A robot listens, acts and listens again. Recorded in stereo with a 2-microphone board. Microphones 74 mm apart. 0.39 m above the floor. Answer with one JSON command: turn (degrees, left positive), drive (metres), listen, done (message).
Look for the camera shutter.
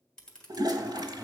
{"turn": 30}
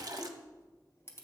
{"turn": 140}
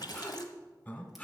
{"listen": true}
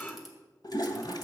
{"listen": true}
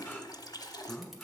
{"done": "I heard a camera shutter from this way, but can't make it out now."}